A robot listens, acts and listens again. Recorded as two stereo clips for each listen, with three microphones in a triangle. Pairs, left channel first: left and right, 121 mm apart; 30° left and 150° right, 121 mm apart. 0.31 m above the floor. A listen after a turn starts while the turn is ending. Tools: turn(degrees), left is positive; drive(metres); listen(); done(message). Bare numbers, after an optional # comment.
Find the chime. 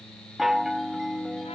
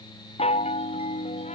done("Found it: a chime, straight ahead.")